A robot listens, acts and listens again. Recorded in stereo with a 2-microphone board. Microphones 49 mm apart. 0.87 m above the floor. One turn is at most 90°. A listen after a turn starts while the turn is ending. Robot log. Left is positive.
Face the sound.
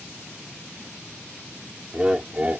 note: The laughter: about 30° right or 150° right.
cmd yaw -30
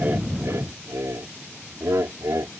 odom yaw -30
note: So it is at 105° right.
cmd yaw -90
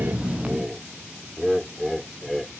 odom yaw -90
end: Facing the laughter.